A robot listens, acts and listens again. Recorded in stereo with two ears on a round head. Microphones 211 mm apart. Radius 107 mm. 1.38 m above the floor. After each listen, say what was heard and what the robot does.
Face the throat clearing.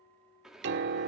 Keep listening.
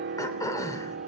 The throat clearing: about 15° left or 165° left. Turn 15° left.
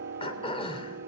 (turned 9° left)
The throat clearing: about 25° left or 155° left. Turn 25° left.
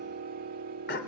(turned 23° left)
So it is at 130° left. Turn 130° left.
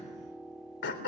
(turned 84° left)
The throat clearing is now 45° left. Turn 45° left.
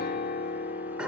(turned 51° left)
Found it: throat clearing, straight ahead.